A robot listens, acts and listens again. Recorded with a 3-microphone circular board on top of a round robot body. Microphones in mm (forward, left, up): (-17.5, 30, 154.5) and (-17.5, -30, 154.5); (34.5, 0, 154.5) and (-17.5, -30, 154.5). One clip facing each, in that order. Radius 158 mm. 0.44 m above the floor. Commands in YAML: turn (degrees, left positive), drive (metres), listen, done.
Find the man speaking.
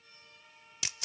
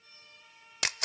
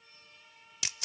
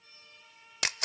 listen: true
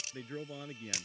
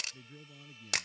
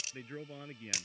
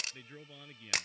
turn: 95
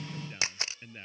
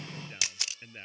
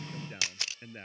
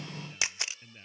turn: -10
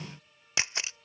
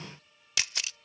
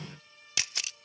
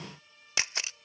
listen: true
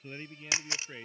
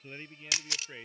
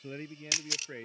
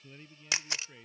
done: "Facing the man speaking."